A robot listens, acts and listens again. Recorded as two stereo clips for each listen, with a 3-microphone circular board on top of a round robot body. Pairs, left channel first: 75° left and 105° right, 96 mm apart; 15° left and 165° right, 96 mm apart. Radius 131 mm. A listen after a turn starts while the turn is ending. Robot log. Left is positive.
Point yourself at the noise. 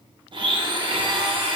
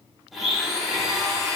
note: The blender: 75° right.
cmd yaw -75
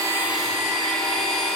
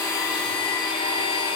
note: The blender is now 10° right.
cmd yaw -10
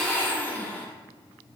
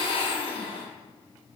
end: Facing the blender.